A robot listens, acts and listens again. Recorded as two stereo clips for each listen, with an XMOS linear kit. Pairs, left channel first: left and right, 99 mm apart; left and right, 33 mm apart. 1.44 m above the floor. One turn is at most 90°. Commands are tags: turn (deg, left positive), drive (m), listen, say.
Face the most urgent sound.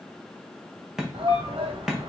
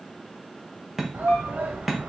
<turn deg="-60"/>
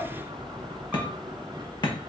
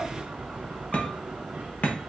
<listen/>
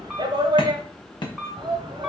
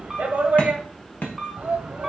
<turn deg="-55"/>
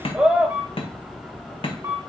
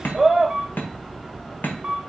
<turn deg="-10"/>
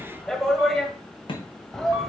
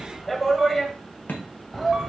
<say>Found it: a shout, straight ahead.</say>